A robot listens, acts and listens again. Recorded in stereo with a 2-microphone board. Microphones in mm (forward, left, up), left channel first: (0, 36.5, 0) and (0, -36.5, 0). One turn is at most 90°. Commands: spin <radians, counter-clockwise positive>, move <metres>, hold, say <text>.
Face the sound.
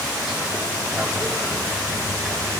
hold
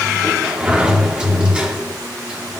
spin -0.52
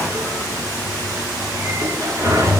spin -1.57
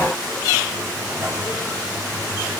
spin -0.79
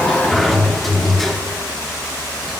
say Facing the sliding door.